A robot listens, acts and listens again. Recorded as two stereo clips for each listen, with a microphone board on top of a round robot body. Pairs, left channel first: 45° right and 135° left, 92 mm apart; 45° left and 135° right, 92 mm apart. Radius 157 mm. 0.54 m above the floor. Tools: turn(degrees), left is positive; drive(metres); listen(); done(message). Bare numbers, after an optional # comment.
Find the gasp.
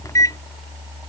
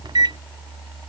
listen()
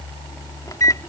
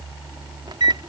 listen()
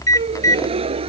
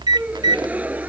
# The gasp: 150° left.
turn(150)
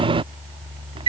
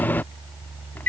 done("Facing where the gasp came from. I can't hear it now.")